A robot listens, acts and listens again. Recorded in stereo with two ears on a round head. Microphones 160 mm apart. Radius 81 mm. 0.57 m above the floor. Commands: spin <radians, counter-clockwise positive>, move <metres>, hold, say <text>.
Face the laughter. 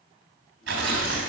hold
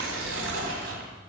hold
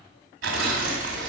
say I can't make out laughter, only tearing paper.